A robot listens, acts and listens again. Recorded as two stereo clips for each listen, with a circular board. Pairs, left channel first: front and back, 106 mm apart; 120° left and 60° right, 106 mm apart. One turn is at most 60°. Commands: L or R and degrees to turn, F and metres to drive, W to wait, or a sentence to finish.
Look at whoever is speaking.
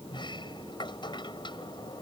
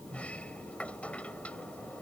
W
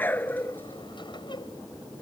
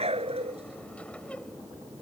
W
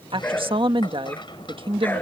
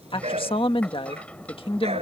L60
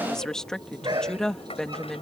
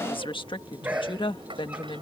L60
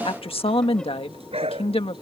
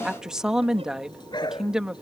L25
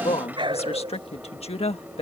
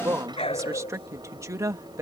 Facing the woman speaking.